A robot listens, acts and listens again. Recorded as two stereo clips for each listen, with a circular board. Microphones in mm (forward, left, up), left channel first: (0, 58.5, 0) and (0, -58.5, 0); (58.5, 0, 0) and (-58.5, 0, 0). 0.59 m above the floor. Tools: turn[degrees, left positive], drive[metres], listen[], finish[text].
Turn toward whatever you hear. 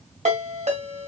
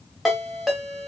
Thought: The ringtone: 90° right.
Action: turn[-90]
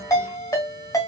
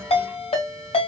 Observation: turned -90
Thought: The ringtone is now 30° left.
Action: turn[30]
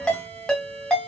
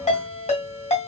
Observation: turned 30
Action: finish[Facing the ringtone, 1 to 2 m away.]